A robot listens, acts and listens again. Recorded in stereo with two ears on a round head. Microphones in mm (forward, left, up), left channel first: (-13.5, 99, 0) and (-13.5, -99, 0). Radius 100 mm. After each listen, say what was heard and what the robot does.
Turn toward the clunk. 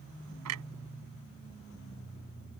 Turn 90° right.
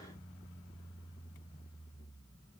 I heard a clunk from this way, but can't make it out now.